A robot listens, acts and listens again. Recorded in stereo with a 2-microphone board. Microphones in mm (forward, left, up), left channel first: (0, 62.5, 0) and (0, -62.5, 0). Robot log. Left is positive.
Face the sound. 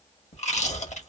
note: The chewing: about 65° left or 115° left.
cmd yaw +65
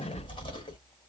note: So it is at 45° left.
cmd yaw +45
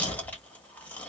note: The chewing is now 10° left.
cmd yaw +10
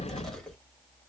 end: Found it: chewing, straight ahead.